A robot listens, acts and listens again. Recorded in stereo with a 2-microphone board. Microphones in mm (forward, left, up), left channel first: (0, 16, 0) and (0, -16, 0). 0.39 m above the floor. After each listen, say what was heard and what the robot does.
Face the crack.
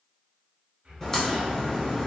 The crack: about 20° left or 160° left. Turn 20° left.
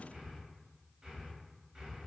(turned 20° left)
Keep listening.
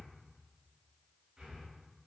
I heard a crack, but can't make it out now. It was about straight ahead or 140° left.